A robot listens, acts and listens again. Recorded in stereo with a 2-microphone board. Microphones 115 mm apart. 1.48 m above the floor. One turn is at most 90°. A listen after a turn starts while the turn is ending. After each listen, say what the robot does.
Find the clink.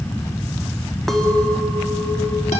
Turn 30° left.
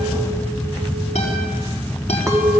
Turn 25° right.
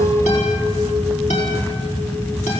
Keep listening.
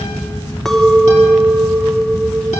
Found it: a clink, straight ahead, 1 to 2 m away.